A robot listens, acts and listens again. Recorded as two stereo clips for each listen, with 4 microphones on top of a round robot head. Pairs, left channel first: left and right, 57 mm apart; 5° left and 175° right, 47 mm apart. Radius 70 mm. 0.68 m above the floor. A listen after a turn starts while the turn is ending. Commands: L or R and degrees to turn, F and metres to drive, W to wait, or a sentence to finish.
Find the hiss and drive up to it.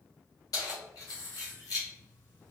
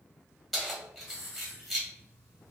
L45
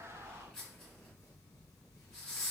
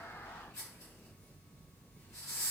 L15
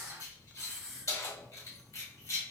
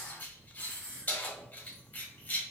F1.0
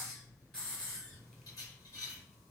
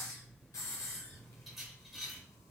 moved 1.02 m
L10
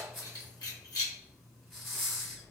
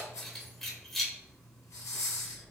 F1.0
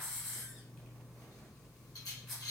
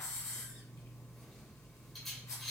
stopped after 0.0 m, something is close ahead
I am next to the hiss.